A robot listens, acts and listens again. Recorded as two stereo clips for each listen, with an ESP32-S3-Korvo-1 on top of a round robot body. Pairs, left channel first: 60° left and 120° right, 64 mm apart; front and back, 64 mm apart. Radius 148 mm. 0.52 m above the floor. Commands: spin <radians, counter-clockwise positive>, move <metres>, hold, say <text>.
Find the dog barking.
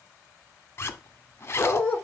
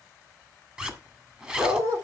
spin 2.27
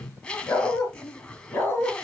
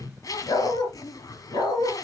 say Facing the dog barking, 2 to 4 m away.